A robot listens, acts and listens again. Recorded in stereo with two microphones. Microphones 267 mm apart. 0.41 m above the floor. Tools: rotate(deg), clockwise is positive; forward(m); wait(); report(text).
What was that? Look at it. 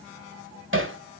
rotate(50)
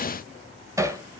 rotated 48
rotate(15)
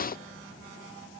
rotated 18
wait()
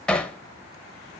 report("Found it: hammering, straight ahead.")